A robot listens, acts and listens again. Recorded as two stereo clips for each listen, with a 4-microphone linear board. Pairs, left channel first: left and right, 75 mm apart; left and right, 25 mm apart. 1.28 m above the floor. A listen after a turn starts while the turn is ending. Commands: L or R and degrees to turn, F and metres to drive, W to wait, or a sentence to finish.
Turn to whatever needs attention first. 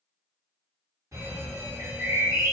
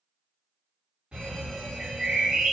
R40
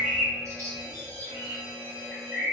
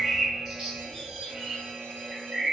R100
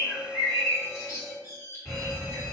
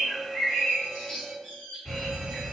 Facing the alarm.